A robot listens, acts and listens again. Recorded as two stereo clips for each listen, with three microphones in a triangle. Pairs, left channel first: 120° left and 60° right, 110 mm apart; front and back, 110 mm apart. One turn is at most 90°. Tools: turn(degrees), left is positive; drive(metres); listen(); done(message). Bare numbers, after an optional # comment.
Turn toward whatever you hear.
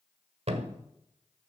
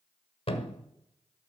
# The thud: 35° right.
turn(-35)
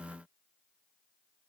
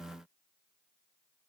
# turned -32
done("Facing where the thud came from. I can't hear it now.")